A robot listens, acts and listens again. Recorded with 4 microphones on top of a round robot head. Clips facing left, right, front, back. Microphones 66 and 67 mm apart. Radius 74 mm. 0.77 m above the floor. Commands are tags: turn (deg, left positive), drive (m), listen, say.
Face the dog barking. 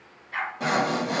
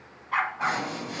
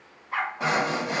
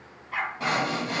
<turn deg="-70"/>
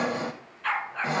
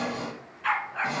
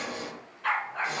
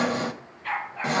<say>Facing the dog barking, 2 to 4 m away.</say>